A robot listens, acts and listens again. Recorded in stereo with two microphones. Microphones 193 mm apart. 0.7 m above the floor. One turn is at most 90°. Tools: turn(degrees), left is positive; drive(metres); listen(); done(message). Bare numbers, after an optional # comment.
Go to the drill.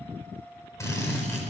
turn(30)
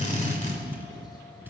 # So it is at 140° left.
turn(90)
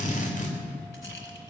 # The drill is now 45° left.
turn(45)
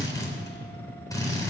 # The drill is now 20° left.
turn(20)
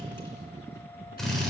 drive(1.0)
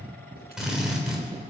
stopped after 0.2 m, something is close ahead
done("Blocked. The drill is further on, straight ahead.")